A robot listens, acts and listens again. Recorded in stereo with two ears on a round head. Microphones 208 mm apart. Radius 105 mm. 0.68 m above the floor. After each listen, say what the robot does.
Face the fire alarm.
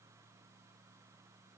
Keep listening.
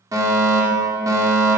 Turn 30° right.
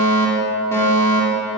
Turn 15° left.
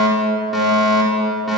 Found it: a fire alarm, straight ahead, 2 to 4 m away.